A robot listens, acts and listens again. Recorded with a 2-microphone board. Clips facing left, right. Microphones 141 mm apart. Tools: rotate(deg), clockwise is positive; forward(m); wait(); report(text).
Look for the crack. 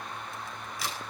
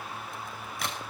rotate(55)
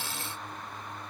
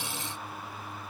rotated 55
wait()
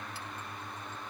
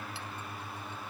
report("I heard a crack, but can't make it out now. It was about straight ahead or 70° right.")